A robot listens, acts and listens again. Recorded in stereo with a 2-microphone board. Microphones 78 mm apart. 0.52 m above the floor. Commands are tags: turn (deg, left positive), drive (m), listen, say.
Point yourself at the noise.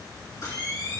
<turn deg="50"/>
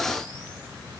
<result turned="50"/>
<listen/>
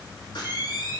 <turn deg="85"/>
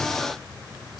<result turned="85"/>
<listen/>
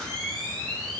<say>Found it: a camera shutter, straight ahead, over 4 m away.</say>